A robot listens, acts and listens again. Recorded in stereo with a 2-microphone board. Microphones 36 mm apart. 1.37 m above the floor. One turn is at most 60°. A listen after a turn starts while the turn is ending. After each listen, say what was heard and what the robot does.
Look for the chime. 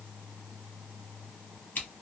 Keep listening.
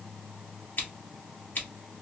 Keep listening.
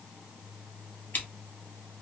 I can't make out a chime, only scissors.